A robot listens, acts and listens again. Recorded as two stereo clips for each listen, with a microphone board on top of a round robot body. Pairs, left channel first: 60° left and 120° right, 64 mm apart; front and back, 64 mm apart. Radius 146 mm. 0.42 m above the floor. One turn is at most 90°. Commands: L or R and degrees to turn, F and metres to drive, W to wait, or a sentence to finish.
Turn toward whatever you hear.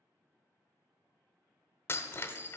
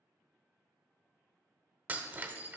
L90
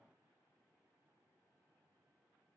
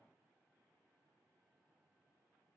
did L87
L30
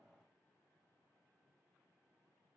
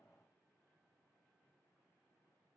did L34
I heard breaking glass from this way, but can't make it out now.